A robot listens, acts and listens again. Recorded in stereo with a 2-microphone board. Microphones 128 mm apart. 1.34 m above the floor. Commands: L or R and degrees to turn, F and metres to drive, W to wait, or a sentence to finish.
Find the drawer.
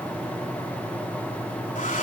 W
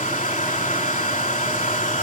W
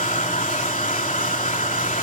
I can't make out a drawer to turn to.